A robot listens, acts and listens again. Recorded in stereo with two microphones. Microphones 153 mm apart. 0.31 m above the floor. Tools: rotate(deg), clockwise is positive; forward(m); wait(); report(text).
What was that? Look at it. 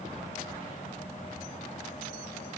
wait()
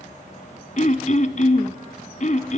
rotate(-55)
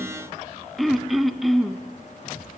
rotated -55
report("Facing the throat clearing.")